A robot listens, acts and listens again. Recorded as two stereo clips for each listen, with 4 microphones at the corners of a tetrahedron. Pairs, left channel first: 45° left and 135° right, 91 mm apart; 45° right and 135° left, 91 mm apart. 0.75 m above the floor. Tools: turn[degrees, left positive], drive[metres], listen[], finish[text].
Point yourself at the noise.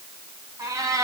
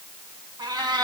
Thought: The cat meowing: 175° left.
Action: turn[175]
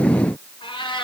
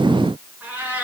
Thought: The cat meowing is now 65° left.
Action: turn[65]
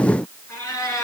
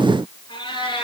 Thought: The cat meowing is now 15° right.
Action: turn[-15]
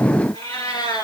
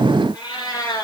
Action: finish[Facing the cat meowing, 2 to 4 m away.]